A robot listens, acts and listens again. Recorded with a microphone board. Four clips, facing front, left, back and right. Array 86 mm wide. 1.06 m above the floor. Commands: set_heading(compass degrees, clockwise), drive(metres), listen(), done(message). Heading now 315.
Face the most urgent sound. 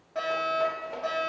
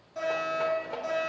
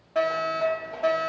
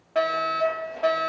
set_heading(65)
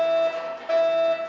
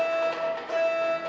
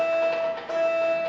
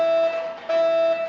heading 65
set_heading(105)
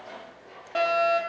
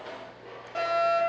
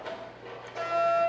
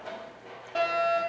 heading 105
done("Found it: a fire alarm, straight ahead.")